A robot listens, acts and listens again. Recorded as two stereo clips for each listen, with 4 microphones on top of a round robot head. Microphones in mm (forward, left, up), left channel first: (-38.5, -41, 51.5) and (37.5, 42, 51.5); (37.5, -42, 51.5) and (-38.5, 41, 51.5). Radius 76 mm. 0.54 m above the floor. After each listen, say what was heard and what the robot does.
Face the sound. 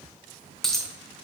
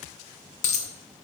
The dropped coin: 45° right. Turn 45° right.
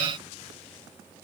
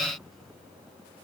Facing where the dropped coin came from. I can't hear it now.